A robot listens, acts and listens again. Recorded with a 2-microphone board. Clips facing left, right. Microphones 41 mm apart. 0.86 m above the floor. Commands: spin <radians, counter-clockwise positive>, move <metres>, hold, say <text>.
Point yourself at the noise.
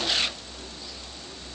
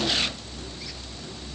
hold
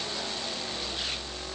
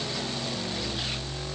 hold
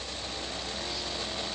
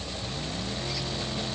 say I can't make out anything.